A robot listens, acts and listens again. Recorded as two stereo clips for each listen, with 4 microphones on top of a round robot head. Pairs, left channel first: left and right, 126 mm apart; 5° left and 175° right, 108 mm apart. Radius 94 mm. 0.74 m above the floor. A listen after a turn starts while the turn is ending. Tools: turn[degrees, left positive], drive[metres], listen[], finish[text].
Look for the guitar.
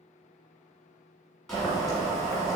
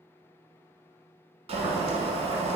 Action: listen[]
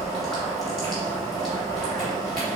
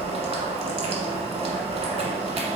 Action: listen[]
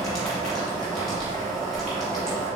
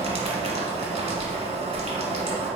Action: finish[I can't make out a guitar, only boiling.]